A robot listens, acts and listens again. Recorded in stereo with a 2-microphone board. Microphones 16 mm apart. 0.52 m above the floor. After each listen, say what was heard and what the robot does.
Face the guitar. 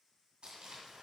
Keep listening.
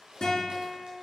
The guitar: about 75° left or 105° left. Turn 75° left.
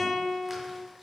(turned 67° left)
Found it: a guitar, straight ahead, 2 to 4 m away.